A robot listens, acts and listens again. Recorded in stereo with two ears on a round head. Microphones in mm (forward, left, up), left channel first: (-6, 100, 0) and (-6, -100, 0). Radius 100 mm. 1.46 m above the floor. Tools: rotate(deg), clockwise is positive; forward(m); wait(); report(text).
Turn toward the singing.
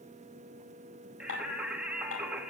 rotate(30)
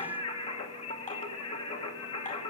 rotate(-25)
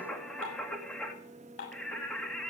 report("Found it: singing, straight ahead.")